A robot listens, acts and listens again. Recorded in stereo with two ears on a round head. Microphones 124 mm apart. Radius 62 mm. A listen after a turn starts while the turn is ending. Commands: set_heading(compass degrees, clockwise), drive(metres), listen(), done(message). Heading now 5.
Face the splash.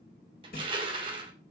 set_heading(295)
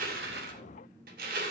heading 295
listen()
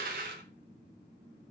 done("I heard a splash, but can't make it out now. It was about straight ahead or 40° left.")